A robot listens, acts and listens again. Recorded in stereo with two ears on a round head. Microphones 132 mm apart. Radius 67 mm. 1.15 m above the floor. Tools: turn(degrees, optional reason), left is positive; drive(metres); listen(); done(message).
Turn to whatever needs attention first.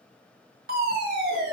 turn(degrees=-65, reason="The fire alarm: about 65° right or 115° right.")
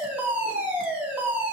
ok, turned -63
turn(degrees=-10, reason="So it is at 10° right.")
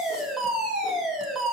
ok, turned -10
done("Facing the fire alarm.")